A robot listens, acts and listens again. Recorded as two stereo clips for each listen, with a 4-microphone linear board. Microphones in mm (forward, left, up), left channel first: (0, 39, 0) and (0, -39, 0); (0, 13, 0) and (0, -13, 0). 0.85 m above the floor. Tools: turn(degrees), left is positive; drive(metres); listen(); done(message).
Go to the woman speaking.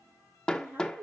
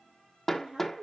turn(degrees=-25)
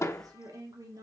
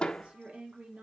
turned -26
turn(degrees=-125)
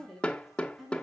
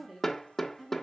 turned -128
drive(metres=1.0)
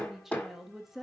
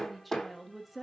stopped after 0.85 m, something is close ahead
done("Arrived at the woman speaking, straight ahead.")